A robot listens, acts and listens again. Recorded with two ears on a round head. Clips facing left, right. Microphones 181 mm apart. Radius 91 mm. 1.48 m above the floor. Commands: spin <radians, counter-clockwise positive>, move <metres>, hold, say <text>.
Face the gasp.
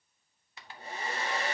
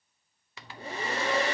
hold
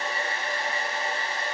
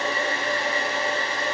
hold
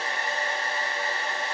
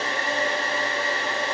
say I can't make out a gasp to turn to.